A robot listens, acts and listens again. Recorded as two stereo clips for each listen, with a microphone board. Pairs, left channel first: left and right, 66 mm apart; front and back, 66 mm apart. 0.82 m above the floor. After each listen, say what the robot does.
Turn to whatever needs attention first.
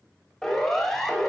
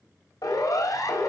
Turn 10° left.
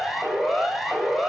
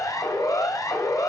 Facing the siren, over 4 m away.